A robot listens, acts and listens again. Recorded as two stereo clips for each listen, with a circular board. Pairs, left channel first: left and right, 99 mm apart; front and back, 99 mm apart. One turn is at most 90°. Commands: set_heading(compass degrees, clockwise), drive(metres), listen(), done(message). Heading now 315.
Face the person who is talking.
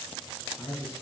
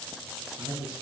set_heading(225)
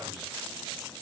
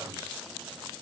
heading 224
set_heading(164)
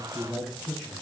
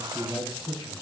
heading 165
done("Facing the man speaking, 1 to 2 m away.")